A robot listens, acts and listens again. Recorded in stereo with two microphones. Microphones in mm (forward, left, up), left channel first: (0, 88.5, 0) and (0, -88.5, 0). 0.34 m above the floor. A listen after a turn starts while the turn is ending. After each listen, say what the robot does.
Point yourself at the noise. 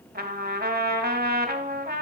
Turn 65° right.
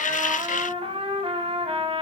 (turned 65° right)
Turn 35° right.
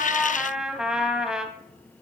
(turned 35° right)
Found it: a trumpet, straight ahead.